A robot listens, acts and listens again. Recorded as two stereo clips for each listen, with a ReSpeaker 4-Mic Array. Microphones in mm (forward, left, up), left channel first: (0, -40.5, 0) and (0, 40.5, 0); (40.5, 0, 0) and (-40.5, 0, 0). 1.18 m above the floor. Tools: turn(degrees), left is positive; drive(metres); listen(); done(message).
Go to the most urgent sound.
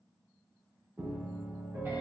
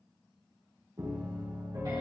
listen()
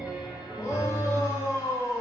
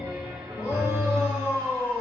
turn(degrees=-40)
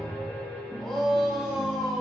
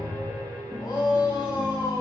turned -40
drive(metres=1.0)
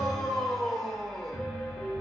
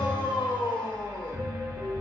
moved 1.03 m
drive(metres=1.0)
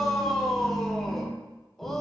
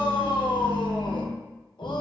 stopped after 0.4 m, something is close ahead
done("Arrived at the shout, straight ahead.")